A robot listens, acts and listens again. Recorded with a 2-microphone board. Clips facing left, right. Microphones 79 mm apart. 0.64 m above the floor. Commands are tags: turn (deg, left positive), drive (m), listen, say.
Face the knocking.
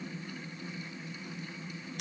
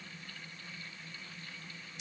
<listen/>
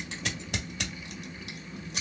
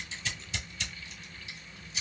<listen/>
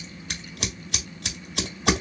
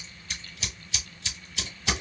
<say>I can't make out knocking to turn to.</say>